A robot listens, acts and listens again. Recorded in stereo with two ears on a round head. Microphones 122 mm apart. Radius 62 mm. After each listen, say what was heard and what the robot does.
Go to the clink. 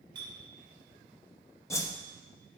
The clink: about 35° right or 145° right. Turn 35° right.
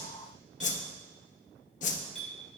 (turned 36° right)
Drive 1.0 m forward.
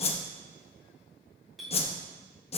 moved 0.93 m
Drive 1.0 m forward.
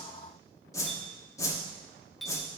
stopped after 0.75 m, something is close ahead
Arrived at the clink, straight ahead.